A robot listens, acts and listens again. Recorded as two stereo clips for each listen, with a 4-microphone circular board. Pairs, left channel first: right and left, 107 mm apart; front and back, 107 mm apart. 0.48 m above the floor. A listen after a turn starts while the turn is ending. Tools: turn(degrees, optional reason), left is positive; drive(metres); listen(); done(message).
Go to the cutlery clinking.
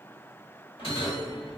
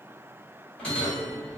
listen()
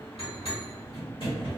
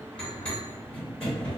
listen()
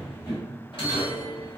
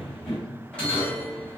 done("I can't make out cutlery clinking, only a bell.")